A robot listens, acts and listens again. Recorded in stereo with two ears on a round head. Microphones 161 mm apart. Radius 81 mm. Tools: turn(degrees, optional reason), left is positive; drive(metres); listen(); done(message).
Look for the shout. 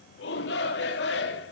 turn(degrees=70, reason="The shout: about 70° left or 110° left.")
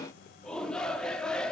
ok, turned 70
done("Facing the shout.")